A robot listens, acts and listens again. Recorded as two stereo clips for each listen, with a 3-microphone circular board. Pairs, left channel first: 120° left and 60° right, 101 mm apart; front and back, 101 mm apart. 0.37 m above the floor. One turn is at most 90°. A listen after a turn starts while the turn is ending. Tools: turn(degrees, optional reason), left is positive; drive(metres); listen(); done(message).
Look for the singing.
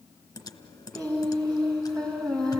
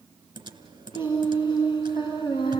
turn(degrees=40, reason="The singing: 40° left.")
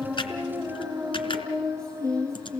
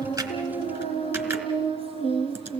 done("Found it: singing, straight ahead.")